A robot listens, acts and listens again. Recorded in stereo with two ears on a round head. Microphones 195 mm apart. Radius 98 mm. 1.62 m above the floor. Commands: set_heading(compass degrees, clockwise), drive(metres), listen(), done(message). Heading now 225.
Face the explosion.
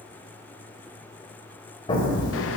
set_heading(200)
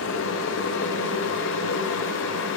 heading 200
listen()
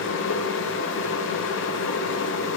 done("I heard an explosion, but can't make it out now. It was about straight ahead or 130° left.")